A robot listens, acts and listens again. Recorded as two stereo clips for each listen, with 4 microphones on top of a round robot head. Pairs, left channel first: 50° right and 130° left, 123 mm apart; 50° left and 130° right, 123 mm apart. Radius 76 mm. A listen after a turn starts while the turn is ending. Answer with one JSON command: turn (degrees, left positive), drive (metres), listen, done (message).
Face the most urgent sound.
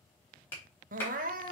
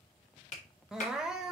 {"turn": 145}
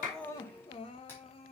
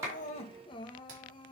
{"done": "Facing the crying, under 1 m away."}